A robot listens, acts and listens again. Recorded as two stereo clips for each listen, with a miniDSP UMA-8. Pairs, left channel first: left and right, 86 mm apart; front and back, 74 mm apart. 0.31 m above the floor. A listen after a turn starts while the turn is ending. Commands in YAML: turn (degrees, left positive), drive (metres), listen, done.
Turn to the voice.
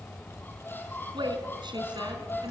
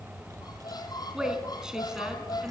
turn: -100
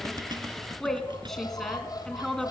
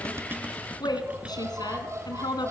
done: "Facing the woman speaking."